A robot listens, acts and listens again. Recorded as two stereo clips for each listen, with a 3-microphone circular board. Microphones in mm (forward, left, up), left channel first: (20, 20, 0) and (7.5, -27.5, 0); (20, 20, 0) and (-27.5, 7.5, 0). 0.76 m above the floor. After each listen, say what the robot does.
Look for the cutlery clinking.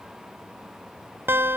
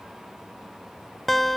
Keep listening.
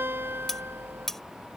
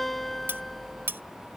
Turn 155° left.
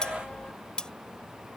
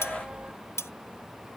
Facing the cutlery clinking.